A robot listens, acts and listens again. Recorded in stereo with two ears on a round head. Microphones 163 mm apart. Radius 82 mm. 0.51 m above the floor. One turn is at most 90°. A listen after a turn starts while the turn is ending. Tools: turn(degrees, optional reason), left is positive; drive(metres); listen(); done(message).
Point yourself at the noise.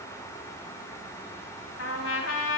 turn(degrees=90)
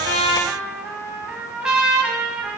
done("Facing the trumpet.")